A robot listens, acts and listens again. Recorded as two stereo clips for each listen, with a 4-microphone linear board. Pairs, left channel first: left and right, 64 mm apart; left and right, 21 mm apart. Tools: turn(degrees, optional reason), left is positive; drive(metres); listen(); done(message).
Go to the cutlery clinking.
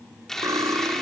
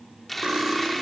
turn(degrees=-90)
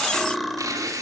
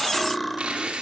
drive(metres=1.0)
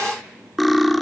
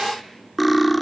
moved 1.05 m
drive(metres=1.0)
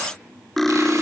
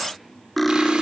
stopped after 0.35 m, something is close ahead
done("I am next to the cutlery clinking.")